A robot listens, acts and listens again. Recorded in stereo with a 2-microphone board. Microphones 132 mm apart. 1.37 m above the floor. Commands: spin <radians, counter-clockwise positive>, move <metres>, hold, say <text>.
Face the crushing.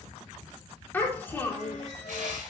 spin -1.31
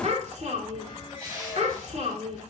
spin -0.52
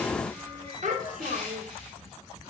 say Facing the crushing, over 4 m away.